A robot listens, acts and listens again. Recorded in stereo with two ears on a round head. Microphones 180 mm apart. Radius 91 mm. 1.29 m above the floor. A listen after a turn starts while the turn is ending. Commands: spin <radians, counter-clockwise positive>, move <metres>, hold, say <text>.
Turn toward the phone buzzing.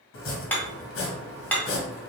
hold
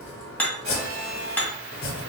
spin -1.22
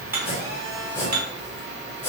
spin -0.52
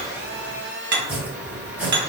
spin -0.17
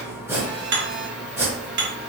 hold
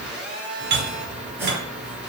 say Found it: a phone buzzing, straight ahead, 1 to 2 m away.